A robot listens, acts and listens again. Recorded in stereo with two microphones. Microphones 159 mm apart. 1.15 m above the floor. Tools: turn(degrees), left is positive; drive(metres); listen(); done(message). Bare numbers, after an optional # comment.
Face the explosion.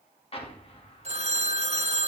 # The explosion: about 40° left or 140° left.
turn(40)
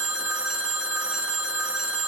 listen()
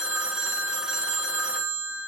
done("I heard an explosion, but can't make it out now. It was about straight ahead or 100° left.")